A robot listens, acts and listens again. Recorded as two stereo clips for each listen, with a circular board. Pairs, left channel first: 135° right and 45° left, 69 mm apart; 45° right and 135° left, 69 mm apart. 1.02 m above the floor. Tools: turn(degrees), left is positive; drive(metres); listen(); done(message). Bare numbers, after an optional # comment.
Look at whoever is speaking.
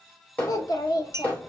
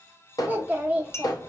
# The child speaking: 160° right.
turn(-160)
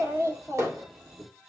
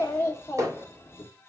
done("Facing the child speaking.")